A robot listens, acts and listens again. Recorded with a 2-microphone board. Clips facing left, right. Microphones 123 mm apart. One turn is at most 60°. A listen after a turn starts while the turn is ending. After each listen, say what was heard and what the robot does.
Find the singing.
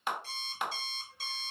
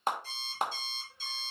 Keep listening.
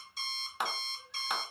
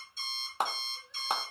Keep listening.
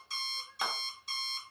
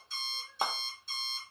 I can't make out singing to turn to.